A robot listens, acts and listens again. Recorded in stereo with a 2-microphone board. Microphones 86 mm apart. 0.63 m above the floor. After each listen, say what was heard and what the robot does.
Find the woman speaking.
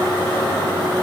Keep listening.
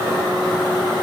Keep listening.
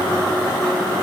I can't make out a woman speaking to turn to.